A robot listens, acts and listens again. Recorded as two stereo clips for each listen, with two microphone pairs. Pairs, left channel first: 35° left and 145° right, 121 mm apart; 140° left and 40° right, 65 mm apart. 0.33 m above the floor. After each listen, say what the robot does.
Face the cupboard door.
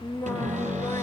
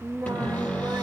Turn 150° right.
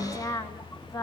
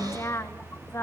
Turn 25° right.
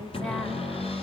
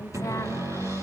Facing the cupboard door, over 4 m away.